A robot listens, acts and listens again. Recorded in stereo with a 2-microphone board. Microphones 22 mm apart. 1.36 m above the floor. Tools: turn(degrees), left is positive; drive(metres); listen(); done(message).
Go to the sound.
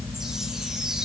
turn(degrees=-25)
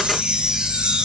turn(degrees=-125)
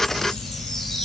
turn(degrees=10)
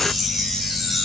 drive(metres=1.0)
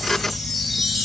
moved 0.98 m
drive(metres=1.0)
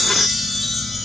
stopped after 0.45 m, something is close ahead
done("Something is in my way. I am facing the chime but have not reached it.")